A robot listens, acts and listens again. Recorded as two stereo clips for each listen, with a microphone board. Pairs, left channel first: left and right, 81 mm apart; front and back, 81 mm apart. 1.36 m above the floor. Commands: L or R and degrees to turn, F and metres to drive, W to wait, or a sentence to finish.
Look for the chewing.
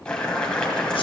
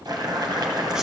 W
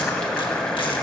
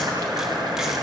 W
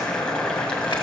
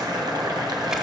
I can't make out chewing to turn to.